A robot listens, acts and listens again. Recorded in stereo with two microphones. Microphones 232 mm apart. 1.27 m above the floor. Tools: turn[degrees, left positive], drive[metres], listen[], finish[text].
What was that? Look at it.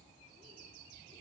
Action: listen[]
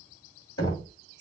Action: turn[90]
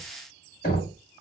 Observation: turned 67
Thought: So it is at 35° left.
Action: turn[35]
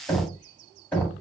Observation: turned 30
Action: finish[Facing the knocking.]